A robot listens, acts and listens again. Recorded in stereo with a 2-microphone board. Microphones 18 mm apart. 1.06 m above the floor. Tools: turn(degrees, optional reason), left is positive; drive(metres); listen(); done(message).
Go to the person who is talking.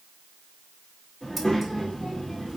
turn(degrees=40, reason="The child speaking: about 40° left or 140° left.")
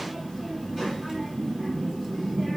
drive(metres=1.0)
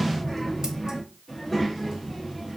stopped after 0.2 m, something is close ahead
done("Something is in my way. I am facing the child speaking but have not reached it.")